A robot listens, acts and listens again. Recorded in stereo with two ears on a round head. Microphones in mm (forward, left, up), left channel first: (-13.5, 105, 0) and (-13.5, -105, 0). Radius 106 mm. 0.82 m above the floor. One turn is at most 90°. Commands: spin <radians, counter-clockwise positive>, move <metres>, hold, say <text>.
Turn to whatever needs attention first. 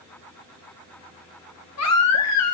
spin 1.31
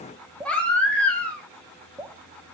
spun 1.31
say Found it: a baby crying, straight ahead.